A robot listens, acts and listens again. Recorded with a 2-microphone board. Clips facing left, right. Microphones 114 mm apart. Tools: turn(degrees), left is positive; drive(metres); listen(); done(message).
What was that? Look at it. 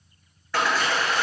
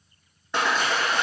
turn(degrees=-20)
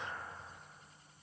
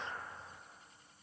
listen()
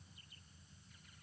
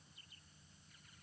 done("I heard a splash, but can't make it out now. It was about straight ahead or 140° right.")